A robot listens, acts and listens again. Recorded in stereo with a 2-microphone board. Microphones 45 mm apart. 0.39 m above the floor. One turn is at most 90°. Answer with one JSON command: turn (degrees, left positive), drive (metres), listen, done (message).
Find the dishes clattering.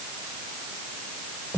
{"listen": true}
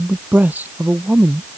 {"listen": true}
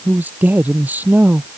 {"done": "I can't make out dishes clattering, only a man speaking."}